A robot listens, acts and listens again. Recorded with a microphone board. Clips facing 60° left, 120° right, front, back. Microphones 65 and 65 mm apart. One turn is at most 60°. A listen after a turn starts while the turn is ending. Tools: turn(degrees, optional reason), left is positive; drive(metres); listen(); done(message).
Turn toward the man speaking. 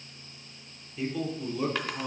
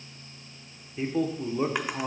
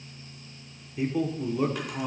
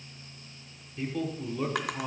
turn(degrees=-60, reason="The man speaking: 85° right.")
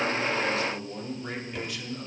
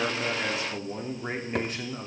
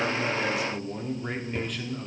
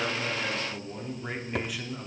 turn(degrees=-60, reason="The man speaking is now 110° right.")
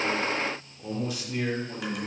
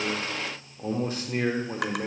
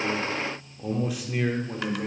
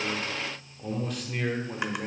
turn(degrees=-60, reason="The man speaking is now 90° right.")
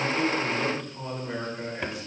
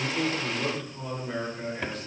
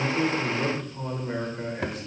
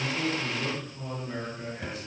turn(degrees=-20, reason="The man speaking is now 20° right.")
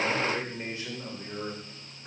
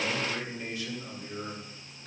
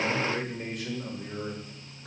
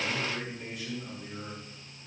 done("Facing the man speaking.")